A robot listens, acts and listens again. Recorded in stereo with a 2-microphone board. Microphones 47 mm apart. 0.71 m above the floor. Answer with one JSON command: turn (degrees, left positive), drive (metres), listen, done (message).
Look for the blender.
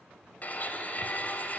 {"turn": 35}
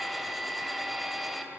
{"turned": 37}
{"done": "Found it: a blender, straight ahead, 2 to 4 m away."}